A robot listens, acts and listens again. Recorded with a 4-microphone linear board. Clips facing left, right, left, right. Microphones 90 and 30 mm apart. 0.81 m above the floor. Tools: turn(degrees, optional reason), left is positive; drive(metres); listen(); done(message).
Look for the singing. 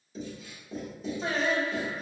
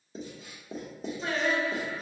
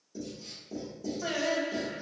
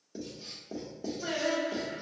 turn(degrees=30, reason="The singing: about 30° left or 150° left.")
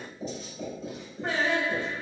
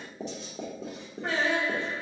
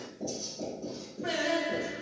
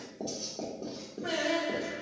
done("Facing the singing.")